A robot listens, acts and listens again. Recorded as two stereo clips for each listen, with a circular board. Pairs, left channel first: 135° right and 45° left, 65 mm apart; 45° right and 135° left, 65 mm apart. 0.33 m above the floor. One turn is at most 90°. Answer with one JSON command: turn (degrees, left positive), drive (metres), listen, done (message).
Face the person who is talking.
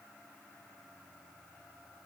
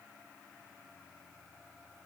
{"listen": true}
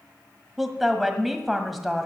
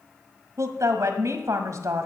{"turn": 90}
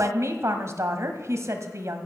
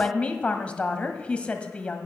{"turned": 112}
{"turn": 20}
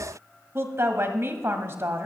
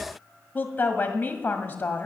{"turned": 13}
{"turn": 10}
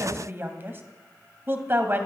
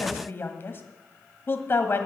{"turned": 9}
{"done": "Facing the woman speaking, 1 to 2 m away."}